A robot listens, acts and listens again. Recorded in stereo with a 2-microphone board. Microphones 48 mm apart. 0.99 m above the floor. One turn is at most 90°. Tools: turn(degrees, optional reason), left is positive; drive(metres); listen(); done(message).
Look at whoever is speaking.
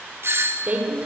turn(degrees=-30, reason="The woman speaking: about 30° right or 150° right.")
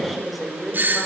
done("Facing the woman speaking.")